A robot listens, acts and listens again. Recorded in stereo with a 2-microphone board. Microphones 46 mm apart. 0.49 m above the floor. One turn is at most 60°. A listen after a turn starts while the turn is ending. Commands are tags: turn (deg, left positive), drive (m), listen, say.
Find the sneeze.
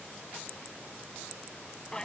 <listen/>
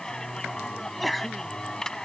<turn deg="30"/>
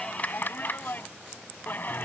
<listen/>
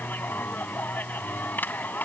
<say>I heard a sneeze, but can't make it out now. It was about 30° right or 150° left.</say>